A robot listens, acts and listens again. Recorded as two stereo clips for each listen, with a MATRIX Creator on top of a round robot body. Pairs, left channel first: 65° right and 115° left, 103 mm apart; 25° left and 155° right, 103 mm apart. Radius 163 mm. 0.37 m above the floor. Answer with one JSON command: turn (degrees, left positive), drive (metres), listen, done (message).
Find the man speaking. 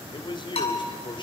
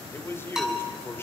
{"turn": -40}
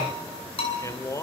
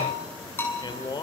{"turn": -15}
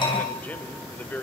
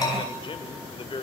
{"done": "Facing the man speaking."}